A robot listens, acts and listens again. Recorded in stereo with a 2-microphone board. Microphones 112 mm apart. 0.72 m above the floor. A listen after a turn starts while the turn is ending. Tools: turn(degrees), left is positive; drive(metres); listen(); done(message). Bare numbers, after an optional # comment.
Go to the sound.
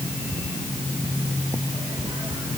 listen()
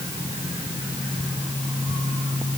listen()
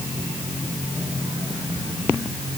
done("I can't make out anything to turn to.")